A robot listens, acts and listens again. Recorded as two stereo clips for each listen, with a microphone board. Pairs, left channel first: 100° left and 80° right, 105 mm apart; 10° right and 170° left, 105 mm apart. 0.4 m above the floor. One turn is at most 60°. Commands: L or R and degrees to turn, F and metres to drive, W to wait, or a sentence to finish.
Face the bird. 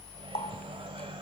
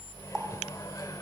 W
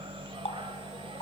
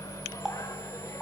W
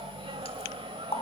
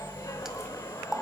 I can't make out a bird, only a running tap and a microwave.